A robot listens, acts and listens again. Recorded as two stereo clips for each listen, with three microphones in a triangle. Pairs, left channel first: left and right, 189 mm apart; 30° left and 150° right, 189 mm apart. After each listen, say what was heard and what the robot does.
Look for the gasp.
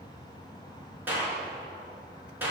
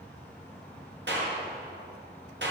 Keep listening.
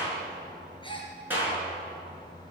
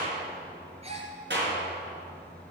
The gasp: 155° left. Turn 155° left.
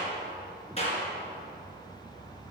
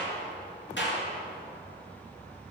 Facing where the gasp came from. I can't hear it now.